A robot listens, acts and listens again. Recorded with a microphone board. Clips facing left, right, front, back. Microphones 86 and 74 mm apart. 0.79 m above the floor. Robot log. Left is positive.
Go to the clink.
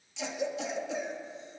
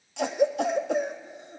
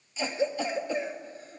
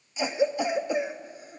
cmd idle
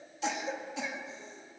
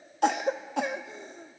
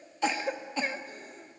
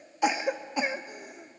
cmd idle
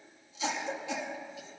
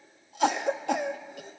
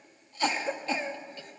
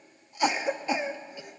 end: I can't make out a clink, only a cough.